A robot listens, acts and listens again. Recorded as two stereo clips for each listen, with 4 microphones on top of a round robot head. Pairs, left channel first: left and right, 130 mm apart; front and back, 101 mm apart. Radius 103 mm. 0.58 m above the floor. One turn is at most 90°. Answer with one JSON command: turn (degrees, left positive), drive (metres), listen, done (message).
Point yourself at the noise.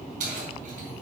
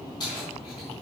{"turn": -60}
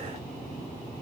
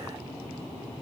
{"listen": true}
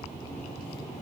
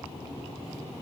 {"listen": true}
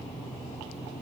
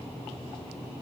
{"done": "I heard keys jangling from this way, but can't make it out now."}